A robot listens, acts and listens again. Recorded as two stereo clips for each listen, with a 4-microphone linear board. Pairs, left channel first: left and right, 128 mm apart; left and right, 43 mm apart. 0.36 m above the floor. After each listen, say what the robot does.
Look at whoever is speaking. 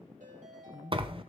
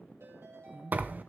Turn 65° left.
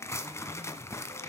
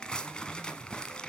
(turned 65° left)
Keep listening.
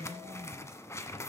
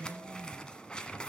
Facing the woman speaking, 2 to 4 m away.